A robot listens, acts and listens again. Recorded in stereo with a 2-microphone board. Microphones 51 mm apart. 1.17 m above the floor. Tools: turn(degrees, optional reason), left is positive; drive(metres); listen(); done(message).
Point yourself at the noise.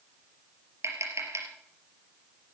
turn(degrees=-90)
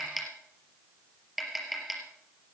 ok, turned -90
done("Found it: tapping, straight ahead, over 4 m away.")